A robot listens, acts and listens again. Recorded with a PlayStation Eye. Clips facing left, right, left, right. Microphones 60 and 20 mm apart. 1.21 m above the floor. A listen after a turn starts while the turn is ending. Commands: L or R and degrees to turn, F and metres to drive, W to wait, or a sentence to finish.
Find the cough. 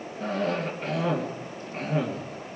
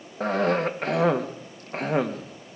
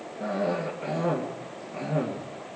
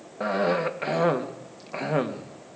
R65
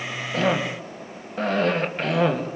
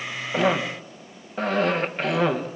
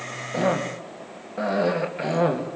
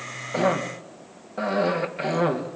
Found it: a cough, straight ahead.